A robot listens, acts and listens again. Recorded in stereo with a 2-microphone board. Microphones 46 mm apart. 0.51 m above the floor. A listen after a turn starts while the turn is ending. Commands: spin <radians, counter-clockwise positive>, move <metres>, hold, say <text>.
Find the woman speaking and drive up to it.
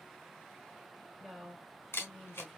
spin 0.52
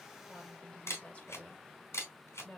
spin 2.62
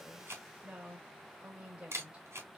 spin -0.52
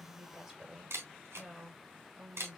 spin -0.17
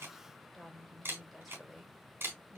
move 1.0
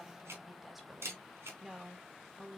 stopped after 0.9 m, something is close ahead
spin -0.17
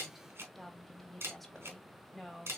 say I am next to the woman speaking.